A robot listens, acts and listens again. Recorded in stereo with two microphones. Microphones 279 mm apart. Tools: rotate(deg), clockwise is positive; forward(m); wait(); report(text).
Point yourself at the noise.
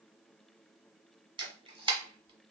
rotate(15)
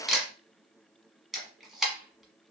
report("Facing the camera shutter.")